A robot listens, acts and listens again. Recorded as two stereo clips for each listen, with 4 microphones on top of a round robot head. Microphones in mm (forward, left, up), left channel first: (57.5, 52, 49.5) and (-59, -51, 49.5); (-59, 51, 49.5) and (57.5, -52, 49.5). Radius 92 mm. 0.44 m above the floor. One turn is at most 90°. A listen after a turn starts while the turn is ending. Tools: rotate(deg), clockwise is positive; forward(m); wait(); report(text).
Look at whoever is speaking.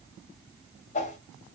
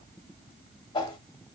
wait()
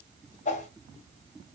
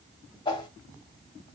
wait()
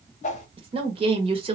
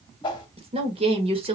rotate(90)
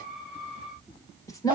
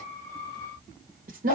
rotate(25)
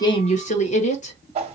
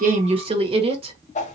rotate(-10)
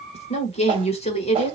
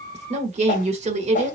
report("Found it: a woman speaking, straight ahead.")